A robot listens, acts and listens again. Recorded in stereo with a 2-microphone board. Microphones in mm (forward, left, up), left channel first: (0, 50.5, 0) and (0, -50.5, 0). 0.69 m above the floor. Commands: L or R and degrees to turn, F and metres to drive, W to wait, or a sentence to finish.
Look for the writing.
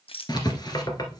L45
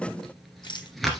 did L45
Found it: writing, straight ahead.